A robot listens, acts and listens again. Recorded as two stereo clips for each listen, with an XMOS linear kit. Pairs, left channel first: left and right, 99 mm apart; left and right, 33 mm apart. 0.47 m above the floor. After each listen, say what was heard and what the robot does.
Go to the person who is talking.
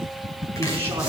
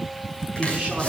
The man speaking: about 25° right or 155° right. Turn 25° right.
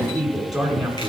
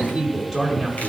Drive 1.0 m forward.
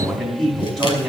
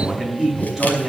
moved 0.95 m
Drive 1.0 m forward.
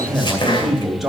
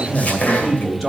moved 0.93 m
Drive 1.0 m forward.
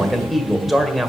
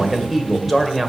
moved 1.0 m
Drive 1.0 m forward.
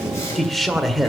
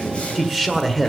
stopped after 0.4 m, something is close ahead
I am next to the man speaking.